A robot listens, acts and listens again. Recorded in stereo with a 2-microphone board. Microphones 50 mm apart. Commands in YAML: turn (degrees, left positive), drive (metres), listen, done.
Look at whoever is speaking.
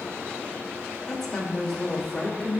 turn: 30
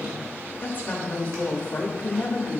turn: 140
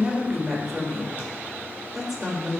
turn: -10
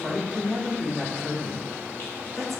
done: "Facing the woman speaking."